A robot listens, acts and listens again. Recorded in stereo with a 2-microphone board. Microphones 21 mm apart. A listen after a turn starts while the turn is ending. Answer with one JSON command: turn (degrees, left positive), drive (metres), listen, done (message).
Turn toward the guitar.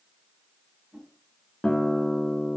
{"turn": 60}
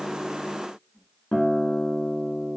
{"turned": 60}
{"turn": 60}
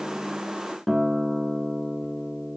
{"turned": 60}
{"done": "Found it: a guitar, straight ahead, 1 to 2 m away."}